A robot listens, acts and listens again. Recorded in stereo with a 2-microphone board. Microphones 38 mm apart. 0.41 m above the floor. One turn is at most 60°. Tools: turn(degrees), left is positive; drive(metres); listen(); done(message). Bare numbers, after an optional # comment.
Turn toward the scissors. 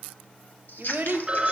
# The scissors: about 65° left or 115° left.
turn(60)
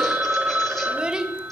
listen()
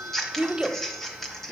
# So it is at 10° left.
turn(10)
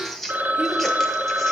done("Found it: scissors, straight ahead, 1 to 2 m away.")